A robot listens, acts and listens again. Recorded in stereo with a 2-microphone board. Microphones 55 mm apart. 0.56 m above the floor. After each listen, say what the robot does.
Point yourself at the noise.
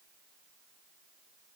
Keep listening.
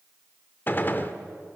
Turn 35° left.
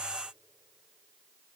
Keep listening.
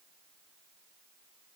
I heard a gunshot, but can't make it out now. It was about straight ahead or 110° left.